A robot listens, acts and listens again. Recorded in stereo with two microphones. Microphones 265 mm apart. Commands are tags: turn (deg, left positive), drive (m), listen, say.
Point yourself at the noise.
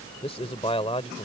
<turn deg="25"/>
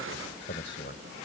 <turn deg="135"/>
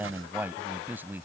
<say>Found it: a man speaking, straight ahead.</say>